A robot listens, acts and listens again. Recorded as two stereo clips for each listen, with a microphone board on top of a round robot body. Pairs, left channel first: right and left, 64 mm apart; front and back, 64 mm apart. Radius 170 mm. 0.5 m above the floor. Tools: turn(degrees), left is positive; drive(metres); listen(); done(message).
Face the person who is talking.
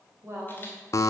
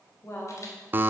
turn(degrees=45)
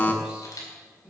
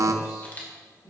turn(degrees=15)
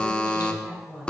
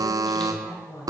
done("Found it: a woman speaking, straight ahead.")